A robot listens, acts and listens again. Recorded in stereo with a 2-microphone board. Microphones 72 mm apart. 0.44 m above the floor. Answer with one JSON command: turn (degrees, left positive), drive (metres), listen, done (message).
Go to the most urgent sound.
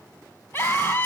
{"turn": 35}
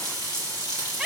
{"drive": 1.0}
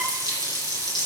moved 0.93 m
{"listen": true}
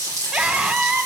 {"turn": -10}
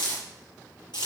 {"listen": true}
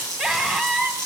{"drive": 1.0}
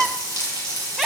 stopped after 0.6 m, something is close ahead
{"done": "I am next to the scream."}